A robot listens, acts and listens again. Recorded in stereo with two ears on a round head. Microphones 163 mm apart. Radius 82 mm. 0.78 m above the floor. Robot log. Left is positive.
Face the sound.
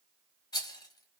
note: The rattle: about 20° left or 160° left.
cmd yaw +20
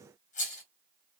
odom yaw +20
note: So it is at 135° left.
cmd yaw +135
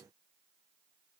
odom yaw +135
cmd idle
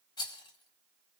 note: The rattle is now 25° left.
cmd yaw +25
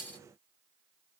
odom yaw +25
note: The rattle is now 10° left.
cmd yaw +10
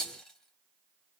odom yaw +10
end: Facing the rattle, 1 to 2 m away.